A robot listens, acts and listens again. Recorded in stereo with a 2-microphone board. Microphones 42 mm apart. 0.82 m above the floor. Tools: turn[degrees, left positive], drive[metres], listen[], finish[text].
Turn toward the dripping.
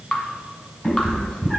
Thought: The dripping: about 20° left or 160° left.
Action: turn[20]
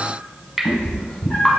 Action: finish[Found it: dripping, straight ahead, 1 to 2 m away.]